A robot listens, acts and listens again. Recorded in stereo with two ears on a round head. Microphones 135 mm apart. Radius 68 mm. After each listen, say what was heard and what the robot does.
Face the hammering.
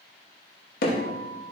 The hammering: about 65° left or 115° left. Turn 65° left.
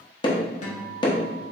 So it is at 35° left. Turn 35° left.
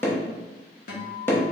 The hammering is now 15° left. Turn 15° left.
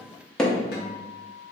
Facing the hammering, under 1 m away.